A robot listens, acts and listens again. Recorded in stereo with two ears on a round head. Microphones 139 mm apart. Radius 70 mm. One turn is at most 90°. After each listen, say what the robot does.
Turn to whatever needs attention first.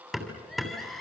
Turn 30° left.
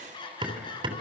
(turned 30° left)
Turn 90° left.
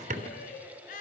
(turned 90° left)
Turn 55° left.
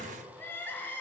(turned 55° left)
Turn 15° left.
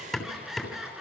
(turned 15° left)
Facing the crying.